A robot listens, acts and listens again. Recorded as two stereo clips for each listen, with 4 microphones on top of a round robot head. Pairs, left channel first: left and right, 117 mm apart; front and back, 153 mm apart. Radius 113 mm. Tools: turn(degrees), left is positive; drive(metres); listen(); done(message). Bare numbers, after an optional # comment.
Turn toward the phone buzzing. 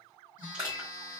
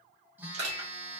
# The phone buzzing: 100° left.
turn(100)
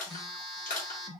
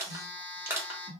done("Facing the phone buzzing.")